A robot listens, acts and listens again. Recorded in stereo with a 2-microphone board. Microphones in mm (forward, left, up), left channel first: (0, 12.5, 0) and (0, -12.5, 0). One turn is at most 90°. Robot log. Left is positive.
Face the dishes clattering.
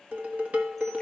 note: The dishes clattering: about 70° right or 110° right.
cmd yaw -70
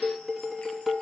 end: Found it: dishes clattering, straight ahead.